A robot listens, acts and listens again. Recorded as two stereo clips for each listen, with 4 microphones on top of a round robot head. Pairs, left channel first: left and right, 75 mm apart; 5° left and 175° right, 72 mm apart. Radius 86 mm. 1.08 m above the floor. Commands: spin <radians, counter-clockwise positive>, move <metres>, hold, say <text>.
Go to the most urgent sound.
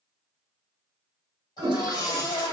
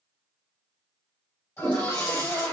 spin 1.05
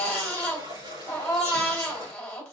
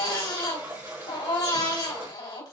spin 0.26
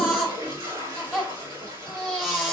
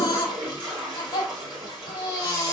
move 1.0
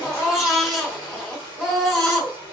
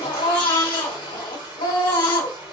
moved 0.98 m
move 1.0
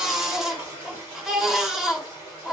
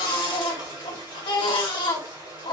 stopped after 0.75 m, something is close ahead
spin -0.17
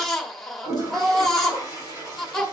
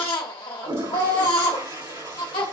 say Arrived at the baby crying, straight ahead.